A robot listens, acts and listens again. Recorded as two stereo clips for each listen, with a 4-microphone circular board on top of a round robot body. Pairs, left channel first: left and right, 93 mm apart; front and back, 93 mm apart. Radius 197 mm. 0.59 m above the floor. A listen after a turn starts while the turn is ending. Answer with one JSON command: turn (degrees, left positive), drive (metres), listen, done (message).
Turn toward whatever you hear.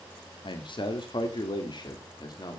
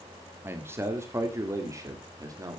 {"turn": 130}
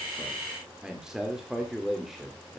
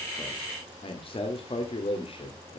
{"done": "Found it: a man speaking, straight ahead, 2 to 4 m away."}